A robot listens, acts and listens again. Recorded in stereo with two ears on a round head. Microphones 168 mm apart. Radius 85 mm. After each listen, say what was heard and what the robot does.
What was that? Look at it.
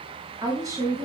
The woman speaking: about 20° right or 160° right. Turn 20° right.
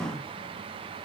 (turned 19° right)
Keep listening.
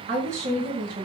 So it is at 130° right. Turn 130° right.
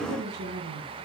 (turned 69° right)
The woman speaking is now 55° right. Turn 55° right.
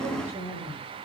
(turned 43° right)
The woman speaking is now 10° right. Turn 10° right.
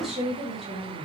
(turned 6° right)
Found it: a woman speaking, straight ahead, over 4 m away.